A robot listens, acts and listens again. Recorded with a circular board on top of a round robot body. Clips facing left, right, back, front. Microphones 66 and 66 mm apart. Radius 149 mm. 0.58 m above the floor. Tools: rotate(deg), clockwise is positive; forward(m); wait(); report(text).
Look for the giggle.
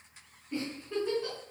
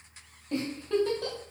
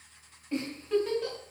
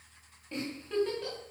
rotate(95)
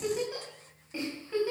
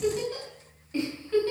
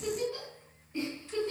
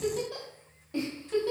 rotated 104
rotate(-10)
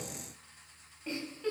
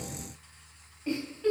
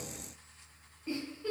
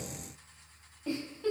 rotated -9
report("Found it: a giggle, straight ahead.")